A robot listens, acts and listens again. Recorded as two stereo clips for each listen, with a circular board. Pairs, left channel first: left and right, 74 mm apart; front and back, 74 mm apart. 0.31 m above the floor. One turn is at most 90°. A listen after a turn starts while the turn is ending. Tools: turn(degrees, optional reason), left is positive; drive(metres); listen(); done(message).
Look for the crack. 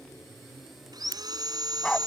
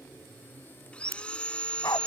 turn(degrees=-90, reason="The crack: 135° right.")
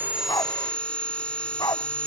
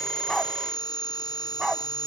turn(degrees=-45, reason="Nothing new. It was at 45° right.")
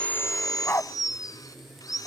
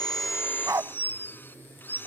done("I heard a crack from this way, but can't make it out now.")